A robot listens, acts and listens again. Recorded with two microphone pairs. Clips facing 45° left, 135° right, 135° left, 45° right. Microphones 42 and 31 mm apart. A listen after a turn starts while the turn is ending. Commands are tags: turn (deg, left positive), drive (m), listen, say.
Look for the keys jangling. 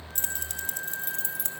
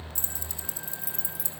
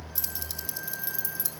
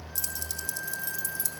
<turn deg="60"/>
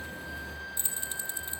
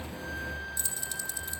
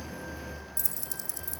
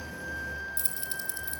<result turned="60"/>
<turn deg="-10"/>
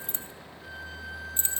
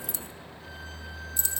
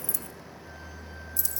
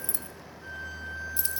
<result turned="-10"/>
<say>Facing the keys jangling.</say>